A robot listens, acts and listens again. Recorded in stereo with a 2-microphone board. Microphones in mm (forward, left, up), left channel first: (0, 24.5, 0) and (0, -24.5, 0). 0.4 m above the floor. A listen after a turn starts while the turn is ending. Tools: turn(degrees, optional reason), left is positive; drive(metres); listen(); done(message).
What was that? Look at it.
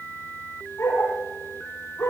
turn(degrees=90)
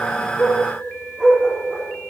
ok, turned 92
turn(degrees=-15, reason="So it is at 15° right.")
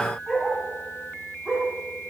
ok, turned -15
turn(degrees=-10, reason="The dog barking is now 10° right.")
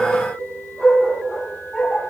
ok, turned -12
done("Facing the dog barking, over 4 m away.")